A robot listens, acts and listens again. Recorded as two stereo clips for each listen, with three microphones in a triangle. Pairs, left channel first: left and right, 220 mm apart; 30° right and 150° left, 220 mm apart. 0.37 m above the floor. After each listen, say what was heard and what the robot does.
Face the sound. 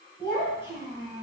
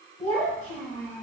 The child speaking: 25° left. Turn 25° left.
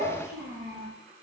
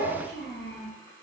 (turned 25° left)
Found it: a child speaking, straight ahead.